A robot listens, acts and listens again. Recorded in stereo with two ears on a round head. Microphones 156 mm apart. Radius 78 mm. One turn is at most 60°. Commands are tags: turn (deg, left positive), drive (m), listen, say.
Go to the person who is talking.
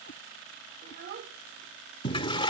<turn deg="-60"/>
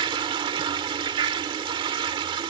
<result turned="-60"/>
<listen/>
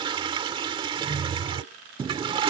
<listen/>
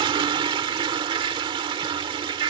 <say>I heard a child speaking, but can't make it out now. It was about 5° right or 55° right. I did not reach it.</say>